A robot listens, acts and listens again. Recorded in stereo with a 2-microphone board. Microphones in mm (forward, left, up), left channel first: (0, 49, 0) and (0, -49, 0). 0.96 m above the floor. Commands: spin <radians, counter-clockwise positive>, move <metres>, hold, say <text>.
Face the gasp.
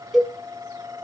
hold
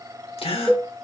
spin 1.57
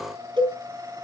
say I heard a gasp from this way, but can't make it out now.